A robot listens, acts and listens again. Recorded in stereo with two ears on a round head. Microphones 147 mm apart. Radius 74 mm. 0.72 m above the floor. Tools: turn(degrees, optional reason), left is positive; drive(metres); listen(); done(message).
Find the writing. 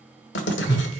turn(degrees=90)
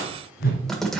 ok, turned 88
done("Facing the writing.")